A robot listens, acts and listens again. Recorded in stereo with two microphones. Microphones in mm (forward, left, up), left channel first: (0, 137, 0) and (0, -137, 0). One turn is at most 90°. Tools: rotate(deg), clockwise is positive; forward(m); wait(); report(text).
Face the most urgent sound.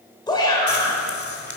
rotate(-15)
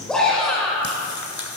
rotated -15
report("Facing the shout, 2 to 4 m away.")